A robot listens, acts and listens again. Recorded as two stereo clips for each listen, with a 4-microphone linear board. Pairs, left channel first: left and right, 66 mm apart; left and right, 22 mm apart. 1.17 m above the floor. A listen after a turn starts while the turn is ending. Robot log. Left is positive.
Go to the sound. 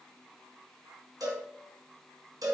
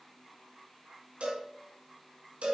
cmd yaw -90
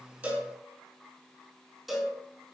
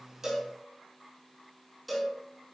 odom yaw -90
cmd fwd 1.0
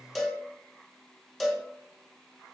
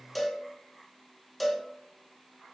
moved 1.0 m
cmd fwd 1.0
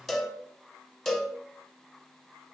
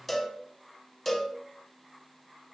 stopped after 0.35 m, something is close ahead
end: I am next to the cowbell.